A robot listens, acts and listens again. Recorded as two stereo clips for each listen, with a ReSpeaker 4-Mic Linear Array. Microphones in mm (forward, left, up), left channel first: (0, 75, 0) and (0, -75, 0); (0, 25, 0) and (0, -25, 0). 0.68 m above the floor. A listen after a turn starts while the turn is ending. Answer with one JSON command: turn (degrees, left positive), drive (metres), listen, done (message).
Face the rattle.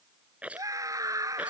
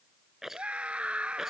{"turn": -30}
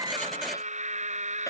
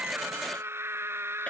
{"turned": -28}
{"listen": true}
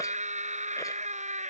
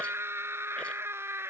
{"listen": true}
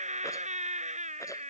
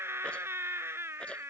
{"done": "I heard a rattle, but can't make it out now. It was about 20° left or 145° right."}